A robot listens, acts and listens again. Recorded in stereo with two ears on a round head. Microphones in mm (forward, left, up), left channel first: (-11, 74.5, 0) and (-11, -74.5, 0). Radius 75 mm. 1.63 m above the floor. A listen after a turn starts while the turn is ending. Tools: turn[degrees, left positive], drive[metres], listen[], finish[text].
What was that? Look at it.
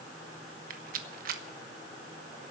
Thought: The rattle: about 55° right or 125° right.
Action: turn[-55]
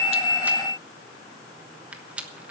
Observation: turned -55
Thought: So it is at 10° right.
Action: turn[-10]
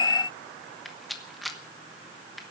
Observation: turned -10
Action: finish[Found it: a rattle, straight ahead.]